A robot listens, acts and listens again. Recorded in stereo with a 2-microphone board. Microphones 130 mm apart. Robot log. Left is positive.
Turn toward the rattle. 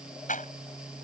cmd yaw +90
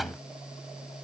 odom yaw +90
cmd idle
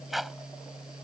end: Found it: a rattle, straight ahead.